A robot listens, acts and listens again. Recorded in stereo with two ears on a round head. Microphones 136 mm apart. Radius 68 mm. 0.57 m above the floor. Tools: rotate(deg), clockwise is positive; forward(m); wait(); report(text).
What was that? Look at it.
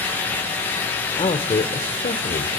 rotate(-45)
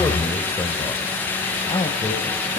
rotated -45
rotate(-30)
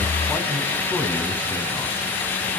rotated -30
wait()
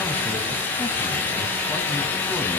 wait()
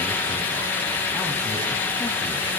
report("I heard a man speaking from this way, but can't make it out now.")